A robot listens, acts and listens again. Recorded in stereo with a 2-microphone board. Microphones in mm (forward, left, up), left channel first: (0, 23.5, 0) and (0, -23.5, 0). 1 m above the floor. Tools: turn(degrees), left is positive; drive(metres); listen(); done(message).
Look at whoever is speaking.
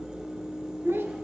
turn(degrees=-65)
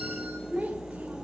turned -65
turn(degrees=-35)
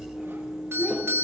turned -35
listen()
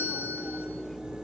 listen()
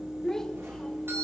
turn(degrees=15)
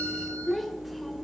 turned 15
done("Found it: a child speaking, straight ahead.")